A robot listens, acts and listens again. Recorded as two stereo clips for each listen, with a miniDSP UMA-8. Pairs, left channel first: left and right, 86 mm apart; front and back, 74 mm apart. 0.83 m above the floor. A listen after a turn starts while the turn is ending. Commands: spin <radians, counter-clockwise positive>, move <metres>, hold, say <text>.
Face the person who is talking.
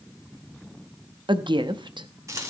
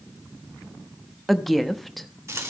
spin -1.57
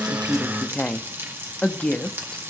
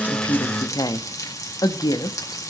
spin 0.26
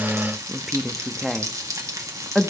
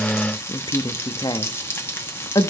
say Found it: a woman speaking, straight ahead.